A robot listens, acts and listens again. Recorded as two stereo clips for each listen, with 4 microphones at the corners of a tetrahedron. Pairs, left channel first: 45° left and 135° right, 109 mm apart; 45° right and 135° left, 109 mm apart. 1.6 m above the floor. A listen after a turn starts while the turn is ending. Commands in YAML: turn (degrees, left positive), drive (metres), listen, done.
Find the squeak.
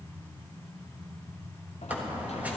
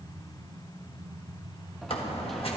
turn: -60
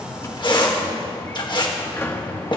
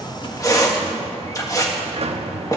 turn: 10
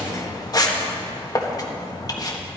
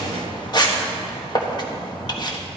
done: "Found it: a squeak, straight ahead."